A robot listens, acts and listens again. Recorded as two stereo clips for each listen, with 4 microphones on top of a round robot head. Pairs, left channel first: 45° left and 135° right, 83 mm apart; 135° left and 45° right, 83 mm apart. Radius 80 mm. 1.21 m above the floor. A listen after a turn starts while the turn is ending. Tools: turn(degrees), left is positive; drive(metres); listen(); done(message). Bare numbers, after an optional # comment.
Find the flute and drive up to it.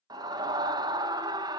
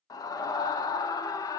listen()
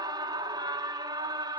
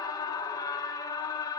listen()
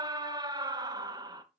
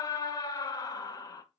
done("I can't make out a flute, only a scream.")